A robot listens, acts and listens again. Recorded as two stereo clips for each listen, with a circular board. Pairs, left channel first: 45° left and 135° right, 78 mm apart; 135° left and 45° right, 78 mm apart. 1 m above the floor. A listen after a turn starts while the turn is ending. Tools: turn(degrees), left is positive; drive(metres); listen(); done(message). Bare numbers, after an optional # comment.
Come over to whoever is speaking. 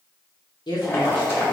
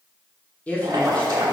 # The woman speaking: 60° left.
turn(60)
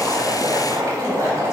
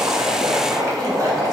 listen()
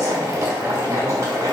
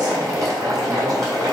listen()
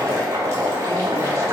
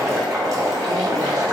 done("Facing where the woman speaking came from. I can't hear it now. I did not reach it.")